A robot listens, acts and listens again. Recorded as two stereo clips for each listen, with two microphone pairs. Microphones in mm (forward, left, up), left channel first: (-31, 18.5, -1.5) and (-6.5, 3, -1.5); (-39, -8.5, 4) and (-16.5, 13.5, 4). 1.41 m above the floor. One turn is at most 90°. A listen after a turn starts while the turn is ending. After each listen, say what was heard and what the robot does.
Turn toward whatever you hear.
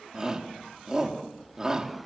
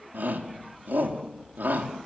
The shout: 35° left. Turn 35° left.
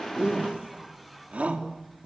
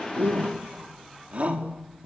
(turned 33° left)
Facing the shout.